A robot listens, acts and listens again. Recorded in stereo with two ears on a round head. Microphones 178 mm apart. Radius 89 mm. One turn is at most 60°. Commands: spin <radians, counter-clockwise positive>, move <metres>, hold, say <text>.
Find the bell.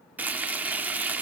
hold
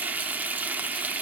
hold
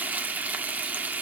say I can't make out a bell to turn to.